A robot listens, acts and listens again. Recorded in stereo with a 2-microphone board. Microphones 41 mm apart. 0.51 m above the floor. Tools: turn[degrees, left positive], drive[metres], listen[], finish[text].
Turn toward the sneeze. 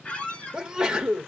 Thought: The sneeze: about 20° right or 160° right.
Action: turn[-20]
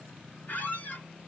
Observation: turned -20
Action: listen[]
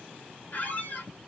Action: finish[I heard a sneeze, but can't make it out now. It was about straight ahead or 140° right.]